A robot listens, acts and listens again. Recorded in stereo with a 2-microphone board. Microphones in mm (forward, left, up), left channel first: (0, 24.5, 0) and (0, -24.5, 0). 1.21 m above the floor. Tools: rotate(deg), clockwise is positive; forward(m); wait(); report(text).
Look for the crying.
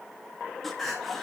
rotate(-30)
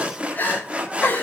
rotate(-140)
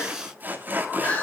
rotate(-30)
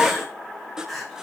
report("Facing the crying, over 4 m away.")